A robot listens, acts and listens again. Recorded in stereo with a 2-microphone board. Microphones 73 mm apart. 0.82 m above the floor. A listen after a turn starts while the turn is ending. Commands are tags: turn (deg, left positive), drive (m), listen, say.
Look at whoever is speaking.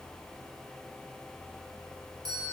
<listen/>
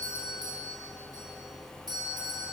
<listen/>
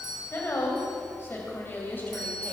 <turn deg="25"/>
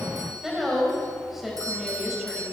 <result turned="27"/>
<say>Facing the woman speaking.</say>